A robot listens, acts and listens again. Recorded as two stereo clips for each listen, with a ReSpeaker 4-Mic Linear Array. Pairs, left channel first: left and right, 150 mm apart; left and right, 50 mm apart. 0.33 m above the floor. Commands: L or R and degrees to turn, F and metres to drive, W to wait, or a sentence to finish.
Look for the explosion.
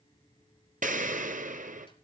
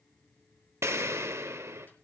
R65
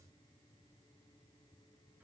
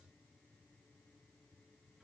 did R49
W
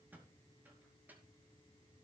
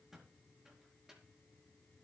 I heard an explosion, but can't make it out now. It was about 15° right or 65° right.